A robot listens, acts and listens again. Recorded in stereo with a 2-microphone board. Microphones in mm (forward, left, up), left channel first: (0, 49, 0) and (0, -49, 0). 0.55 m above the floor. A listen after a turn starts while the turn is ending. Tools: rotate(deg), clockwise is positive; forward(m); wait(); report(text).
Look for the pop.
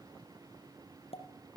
rotate(-90)
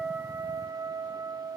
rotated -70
rotate(-20)
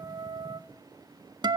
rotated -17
report("Facing where the pop came from. I can't hear it now.")